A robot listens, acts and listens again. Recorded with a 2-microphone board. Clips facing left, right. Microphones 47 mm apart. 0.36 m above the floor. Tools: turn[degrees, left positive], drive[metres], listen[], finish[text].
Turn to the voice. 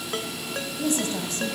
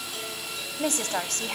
Thought: The woman speaking: about 60° right or 120° right.
Action: turn[-60]
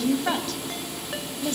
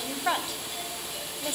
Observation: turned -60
Thought: So it is at 15° right.
Action: turn[-15]
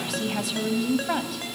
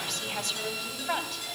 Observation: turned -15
Action: finish[Found it: a woman speaking, straight ahead, 1 to 2 m away.]